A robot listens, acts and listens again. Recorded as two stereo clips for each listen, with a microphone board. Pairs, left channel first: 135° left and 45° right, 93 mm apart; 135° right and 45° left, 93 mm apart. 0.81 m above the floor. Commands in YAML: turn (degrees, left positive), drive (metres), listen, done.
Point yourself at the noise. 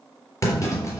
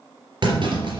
turn: 80
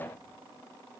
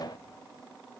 done: "I heard a clunk from this way, but can't make it out now."